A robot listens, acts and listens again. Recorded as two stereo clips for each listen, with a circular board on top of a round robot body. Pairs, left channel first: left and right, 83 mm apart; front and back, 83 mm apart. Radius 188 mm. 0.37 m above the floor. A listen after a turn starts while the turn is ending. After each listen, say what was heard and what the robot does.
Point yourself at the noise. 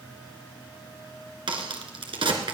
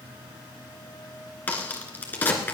The crack: 70° right. Turn 70° right.
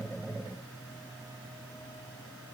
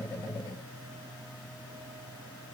I heard a crack from this way, but can't make it out now.